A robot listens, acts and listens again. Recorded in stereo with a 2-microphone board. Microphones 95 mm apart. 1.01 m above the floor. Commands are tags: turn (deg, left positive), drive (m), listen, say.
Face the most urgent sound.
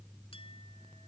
<listen/>
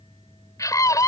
<turn deg="35"/>
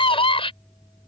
<turn deg="105"/>
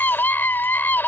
<turn deg="20"/>
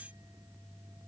<listen/>
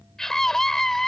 <say>Facing the scream.</say>